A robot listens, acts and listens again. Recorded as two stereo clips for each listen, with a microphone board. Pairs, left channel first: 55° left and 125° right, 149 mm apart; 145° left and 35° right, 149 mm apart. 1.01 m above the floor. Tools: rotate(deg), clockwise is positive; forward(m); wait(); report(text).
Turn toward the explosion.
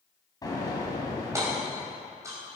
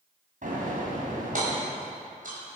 rotate(10)
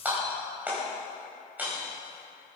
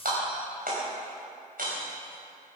report("Facing where the explosion came from. I can't hear it now.")